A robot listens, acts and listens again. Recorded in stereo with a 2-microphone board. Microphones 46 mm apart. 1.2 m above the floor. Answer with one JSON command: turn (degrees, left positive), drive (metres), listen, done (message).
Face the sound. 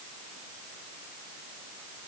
{"listen": true}
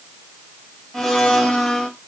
{"turn": 30}
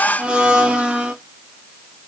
{"turn": -20}
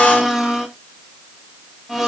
{"done": "Found it: a blender, straight ahead."}